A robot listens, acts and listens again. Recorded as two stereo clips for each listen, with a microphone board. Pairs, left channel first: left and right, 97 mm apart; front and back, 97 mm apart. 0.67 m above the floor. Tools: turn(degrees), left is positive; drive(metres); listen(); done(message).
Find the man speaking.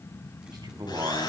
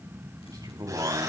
turn(degrees=-130)
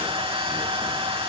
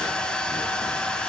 listen()
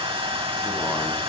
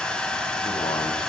listen()
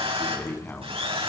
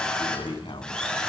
turn(degrees=20)
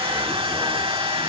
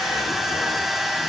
listen()
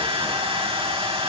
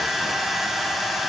listen()
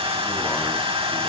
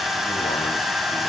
done("I heard a man speaking from this way, but can't make it out now.")